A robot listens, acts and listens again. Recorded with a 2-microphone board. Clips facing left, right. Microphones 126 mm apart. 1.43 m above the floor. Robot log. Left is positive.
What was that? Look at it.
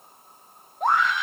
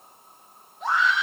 note: The scream: about 45° left or 135° left.
cmd yaw +45
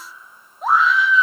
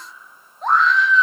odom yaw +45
end: Found it: a scream, straight ahead, 1 to 2 m away.